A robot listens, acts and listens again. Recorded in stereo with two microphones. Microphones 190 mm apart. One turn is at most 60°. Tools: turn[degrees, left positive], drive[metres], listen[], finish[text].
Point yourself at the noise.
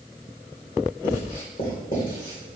Thought: The writing: about 45° left or 135° left.
Action: turn[45]
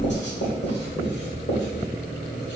Thought: So it is at 80° left.
Action: turn[60]
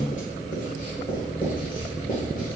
Thought: The writing is now 50° left.
Action: turn[50]
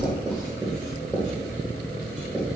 Action: finish[Found it: writing, straight ahead, 1 to 2 m away.]